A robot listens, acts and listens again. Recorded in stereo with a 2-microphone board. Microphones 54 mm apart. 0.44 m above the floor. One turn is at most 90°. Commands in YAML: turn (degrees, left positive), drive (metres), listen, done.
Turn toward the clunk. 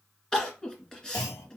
turn: 70
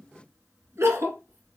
listen: true
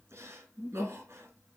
done: "I heard a clunk, but can't make it out now. It was about straight ahead or 40° left."